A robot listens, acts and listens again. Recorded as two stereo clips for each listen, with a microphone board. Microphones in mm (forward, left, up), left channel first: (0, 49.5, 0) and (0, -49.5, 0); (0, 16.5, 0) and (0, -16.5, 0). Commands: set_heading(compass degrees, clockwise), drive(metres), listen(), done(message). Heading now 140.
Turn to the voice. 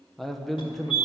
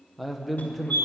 set_heading(110)
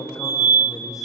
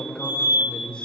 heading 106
set_heading(321)
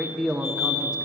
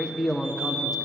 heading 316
set_heading(326)
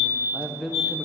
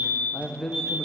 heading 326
done("Facing the man speaking, under 1 m away.")